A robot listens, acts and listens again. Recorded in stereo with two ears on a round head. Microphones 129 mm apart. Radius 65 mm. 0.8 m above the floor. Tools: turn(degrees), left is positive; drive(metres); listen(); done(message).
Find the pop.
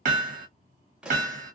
turn(degrees=-30)
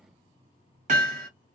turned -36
listen()
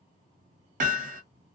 done("I heard a pop, but can't make it out now. It was about 30° left or 140° right.")